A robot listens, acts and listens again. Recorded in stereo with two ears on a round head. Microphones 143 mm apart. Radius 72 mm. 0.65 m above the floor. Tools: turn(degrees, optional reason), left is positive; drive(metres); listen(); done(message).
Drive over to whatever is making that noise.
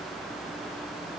listen()
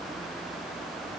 listen()
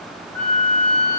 turn(degrees=15, reason="The flute: about 15° left or 165° left.")
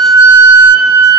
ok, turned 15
drive(metres=1.0)
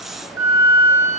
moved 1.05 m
turn(degrees=-15, reason="The flute is now 15° right.")
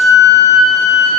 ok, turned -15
drive(metres=1.0)
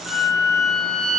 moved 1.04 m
drive(metres=1.0)
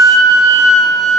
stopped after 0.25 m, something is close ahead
done("I am next to the flute.")